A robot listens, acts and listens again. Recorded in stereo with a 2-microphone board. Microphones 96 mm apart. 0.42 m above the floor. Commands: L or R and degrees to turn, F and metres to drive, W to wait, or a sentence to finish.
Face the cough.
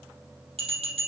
W
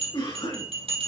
L70
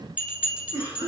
L35
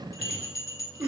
R10
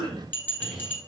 Facing the cough, over 4 m away.